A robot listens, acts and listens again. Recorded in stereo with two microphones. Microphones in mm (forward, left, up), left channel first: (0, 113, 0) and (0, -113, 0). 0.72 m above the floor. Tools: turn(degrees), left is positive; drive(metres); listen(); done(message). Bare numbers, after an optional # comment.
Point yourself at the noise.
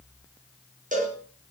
# The cowbell: about 35° right or 145° right.
turn(-35)
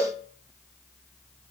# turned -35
done("Found it: a cowbell, straight ahead.")